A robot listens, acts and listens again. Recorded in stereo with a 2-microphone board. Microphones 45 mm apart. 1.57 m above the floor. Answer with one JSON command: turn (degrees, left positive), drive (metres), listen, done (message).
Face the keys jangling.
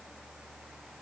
{"listen": true}
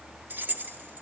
{"turn": -50}
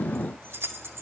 {"turn": -80}
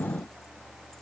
{"listen": true}
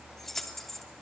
{"turn": 10}
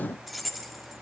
{"done": "Found it: keys jangling, straight ahead."}